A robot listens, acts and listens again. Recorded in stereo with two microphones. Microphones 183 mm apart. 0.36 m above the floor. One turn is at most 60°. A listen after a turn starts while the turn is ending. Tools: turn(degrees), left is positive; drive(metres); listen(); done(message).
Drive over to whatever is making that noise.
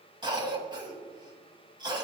turn(degrees=-25)
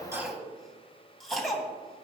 drive(metres=1.0)
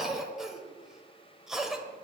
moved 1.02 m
drive(metres=1.0)
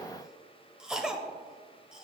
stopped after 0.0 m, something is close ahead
done("I am next to the cough.")